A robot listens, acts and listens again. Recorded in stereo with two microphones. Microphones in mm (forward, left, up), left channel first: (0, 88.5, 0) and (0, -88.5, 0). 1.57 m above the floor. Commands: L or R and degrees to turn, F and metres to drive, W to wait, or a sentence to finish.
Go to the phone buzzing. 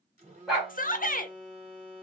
R40
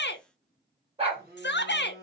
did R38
R95
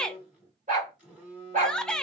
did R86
R10
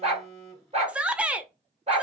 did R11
F1.0
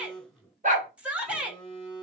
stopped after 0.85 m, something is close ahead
Arrived at the phone buzzing, straight ahead.